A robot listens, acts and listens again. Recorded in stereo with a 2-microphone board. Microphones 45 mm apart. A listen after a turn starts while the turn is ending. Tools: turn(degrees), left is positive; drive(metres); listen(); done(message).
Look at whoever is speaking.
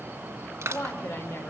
turn(degrees=70)
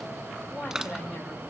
done("Found it: a woman speaking, straight ahead, over 4 m away.")